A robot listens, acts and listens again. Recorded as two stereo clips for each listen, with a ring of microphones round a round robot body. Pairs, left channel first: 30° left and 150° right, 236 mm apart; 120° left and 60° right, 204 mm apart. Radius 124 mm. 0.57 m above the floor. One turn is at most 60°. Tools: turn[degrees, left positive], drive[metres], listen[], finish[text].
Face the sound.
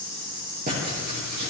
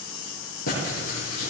Thought: The writing: 155° left.
Action: turn[60]
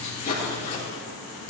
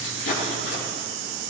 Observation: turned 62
Thought: The writing is now 95° left.
Action: turn[60]
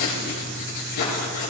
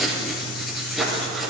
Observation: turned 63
Thought: The writing is now 30° left.
Action: turn[30]
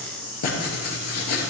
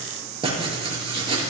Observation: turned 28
Action: finish[Found it: writing, straight ahead, 2 to 4 m away.]